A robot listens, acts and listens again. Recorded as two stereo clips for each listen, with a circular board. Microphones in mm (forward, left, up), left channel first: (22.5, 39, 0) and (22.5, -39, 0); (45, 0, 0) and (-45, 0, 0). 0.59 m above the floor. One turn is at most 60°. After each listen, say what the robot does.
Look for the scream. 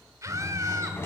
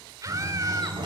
Turn 60° right.
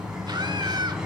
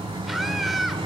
Turn 60° right.
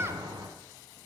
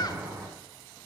Turn 35° right.
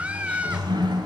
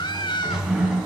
Turn 20° right.
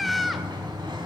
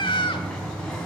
Found it: a scream, straight ahead, 1 to 2 m away.